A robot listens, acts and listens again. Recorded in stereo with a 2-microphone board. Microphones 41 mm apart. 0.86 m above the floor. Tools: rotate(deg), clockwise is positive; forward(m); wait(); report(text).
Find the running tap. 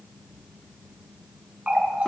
rotate(35)
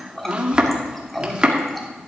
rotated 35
report("Facing the running tap.")